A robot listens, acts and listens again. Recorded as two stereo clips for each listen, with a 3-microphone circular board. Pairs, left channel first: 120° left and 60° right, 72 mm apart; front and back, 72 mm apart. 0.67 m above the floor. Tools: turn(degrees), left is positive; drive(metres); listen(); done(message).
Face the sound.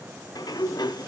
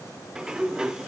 turn(degrees=100)
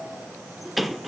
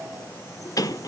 turn(degrees=30)
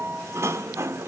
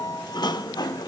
turn(degrees=-10)
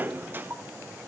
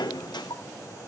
done("Facing the sliding door, under 1 m away.")